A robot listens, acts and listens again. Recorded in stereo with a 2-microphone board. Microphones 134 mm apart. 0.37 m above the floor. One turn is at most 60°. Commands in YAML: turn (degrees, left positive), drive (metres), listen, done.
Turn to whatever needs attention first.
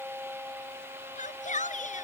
turn: 60
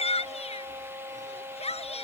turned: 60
turn: 50
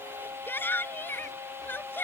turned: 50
turn: 15
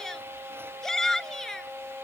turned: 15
done: "Found it: a shout, straight ahead."